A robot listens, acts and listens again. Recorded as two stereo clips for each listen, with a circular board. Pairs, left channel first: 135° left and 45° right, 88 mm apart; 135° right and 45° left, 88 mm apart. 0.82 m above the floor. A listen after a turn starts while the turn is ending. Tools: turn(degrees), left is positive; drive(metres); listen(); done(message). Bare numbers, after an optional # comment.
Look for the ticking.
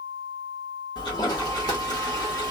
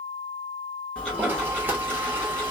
# The ticking: 145° left.
turn(145)
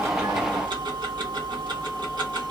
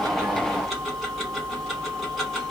# The ticking is now 45° right.
turn(-45)
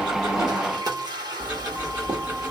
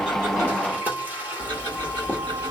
# The ticking is now 20° left.
turn(20)
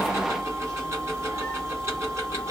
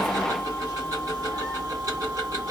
done("Facing the ticking.")